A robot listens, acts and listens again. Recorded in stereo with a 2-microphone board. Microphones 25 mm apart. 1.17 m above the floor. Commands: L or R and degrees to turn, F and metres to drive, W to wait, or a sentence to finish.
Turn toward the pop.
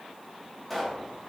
L30
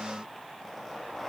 W
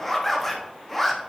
I heard a pop, but can't make it out now. It was about 25° right or 145° left.